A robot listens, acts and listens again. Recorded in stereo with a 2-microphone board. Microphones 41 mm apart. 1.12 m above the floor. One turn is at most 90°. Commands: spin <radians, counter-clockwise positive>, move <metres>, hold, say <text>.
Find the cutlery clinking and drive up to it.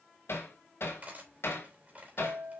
spin -0.70
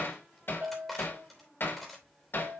move 1.0
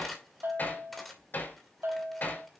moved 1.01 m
move 1.0
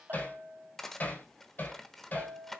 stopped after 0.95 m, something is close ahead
say I am next to the cutlery clinking.